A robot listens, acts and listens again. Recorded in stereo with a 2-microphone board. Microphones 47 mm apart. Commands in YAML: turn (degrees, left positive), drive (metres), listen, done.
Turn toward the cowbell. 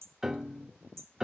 listen: true
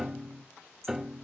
listen: true
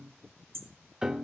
done: "I can't make out a cowbell, only hammering and a piano."